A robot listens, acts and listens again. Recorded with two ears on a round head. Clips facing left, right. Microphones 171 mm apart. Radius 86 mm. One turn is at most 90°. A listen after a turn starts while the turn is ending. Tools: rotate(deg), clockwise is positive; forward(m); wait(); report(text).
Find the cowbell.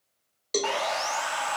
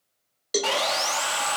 rotate(30)
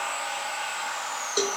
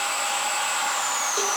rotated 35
wait()
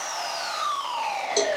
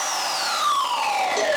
wait()
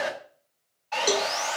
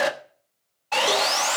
report("I heard a cowbell, but can't make it out now. It was about 25° left or 135° right.")